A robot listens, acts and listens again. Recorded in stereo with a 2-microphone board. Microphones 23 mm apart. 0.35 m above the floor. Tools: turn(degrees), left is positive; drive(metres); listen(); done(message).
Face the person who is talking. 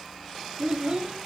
turn(degrees=-55)
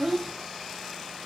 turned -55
turn(degrees=-15)
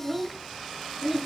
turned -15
done("Found it: a child speaking, straight ahead, under 1 m away.")